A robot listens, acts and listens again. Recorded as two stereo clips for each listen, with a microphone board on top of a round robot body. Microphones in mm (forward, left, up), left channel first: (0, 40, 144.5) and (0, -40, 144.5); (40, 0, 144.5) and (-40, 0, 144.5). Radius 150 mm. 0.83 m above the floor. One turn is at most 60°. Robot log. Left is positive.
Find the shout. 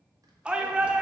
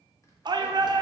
note: The shout: 165° right.
cmd yaw -60
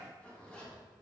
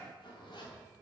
note: Nothing new. It was at 105° right.
cmd yaw -60
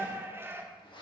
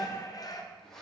note: The shout is now 30° right.
cmd yaw -30
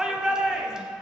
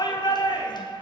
note: The shout is now 10° right.
cmd yaw -10
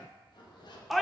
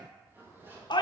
end: Facing the shout.